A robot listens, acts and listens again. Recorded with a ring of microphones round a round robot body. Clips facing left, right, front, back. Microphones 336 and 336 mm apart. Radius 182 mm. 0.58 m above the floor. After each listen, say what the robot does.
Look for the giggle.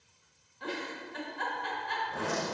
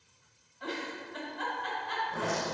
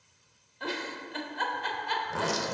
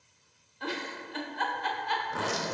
Turn 30° left.
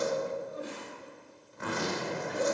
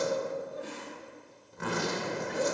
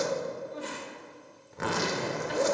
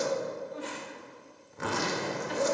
Found it: a giggle, straight ahead.